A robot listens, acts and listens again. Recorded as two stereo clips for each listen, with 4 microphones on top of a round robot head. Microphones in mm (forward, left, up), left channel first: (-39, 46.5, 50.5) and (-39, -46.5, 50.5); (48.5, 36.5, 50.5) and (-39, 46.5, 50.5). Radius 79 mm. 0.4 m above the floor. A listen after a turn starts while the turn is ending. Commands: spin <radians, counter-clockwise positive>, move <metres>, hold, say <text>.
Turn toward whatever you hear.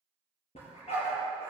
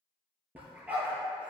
spin 1.75
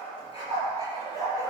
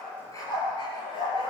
spin 0.52
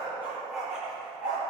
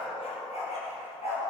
spin -0.17
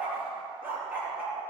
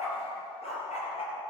say Facing the dog barking, 2 to 4 m away.